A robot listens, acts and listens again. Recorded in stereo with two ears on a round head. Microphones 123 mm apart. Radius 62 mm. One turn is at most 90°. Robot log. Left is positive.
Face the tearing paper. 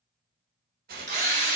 cmd yaw -90
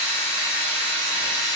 cmd idle
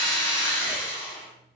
cmd idle
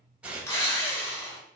note: The tearing paper is now 10° right.
cmd yaw -10
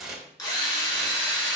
end: Found it: tearing paper, straight ahead, under 1 m away.